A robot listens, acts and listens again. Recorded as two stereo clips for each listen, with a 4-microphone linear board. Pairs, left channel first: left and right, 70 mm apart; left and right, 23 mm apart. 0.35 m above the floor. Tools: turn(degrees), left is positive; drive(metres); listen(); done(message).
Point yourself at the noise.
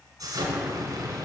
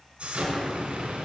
turn(degrees=-65)
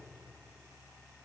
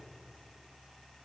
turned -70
listen()
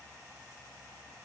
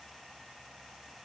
done("I heard an explosion, but can't make it out now. It was about 5° left or 45° right.")